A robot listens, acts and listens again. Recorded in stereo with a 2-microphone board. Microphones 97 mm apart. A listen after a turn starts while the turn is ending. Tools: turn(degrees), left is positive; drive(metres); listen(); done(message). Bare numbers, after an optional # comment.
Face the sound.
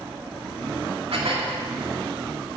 # The dishes clattering: about 75° right or 105° right.
turn(-75)
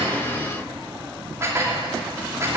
# So it is at 30° right.
turn(-30)
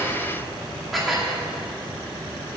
done("Found it: dishes clattering, straight ahead, 2 to 4 m away.")